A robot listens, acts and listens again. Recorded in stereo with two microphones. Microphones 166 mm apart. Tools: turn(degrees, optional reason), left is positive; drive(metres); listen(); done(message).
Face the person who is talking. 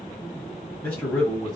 turn(degrees=30)
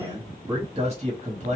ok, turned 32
turn(degrees=-45, reason="So it is at 45° right.")
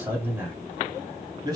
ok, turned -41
turn(degrees=-30, reason="The man speaking is now 30° right.")
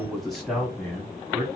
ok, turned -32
turn(degrees=-15, reason="The man speaking is now 15° right.")
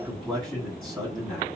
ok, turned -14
done("Found it: a man speaking, straight ahead.")